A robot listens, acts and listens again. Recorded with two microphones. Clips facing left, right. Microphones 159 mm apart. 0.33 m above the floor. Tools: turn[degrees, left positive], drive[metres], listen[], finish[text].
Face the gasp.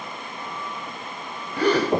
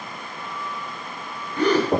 Action: turn[30]
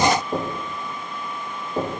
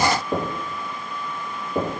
Action: listen[]
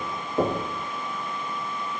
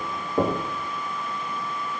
Action: finish[I heard a gasp, but can't make it out now. It was about 20° right or 140° left.]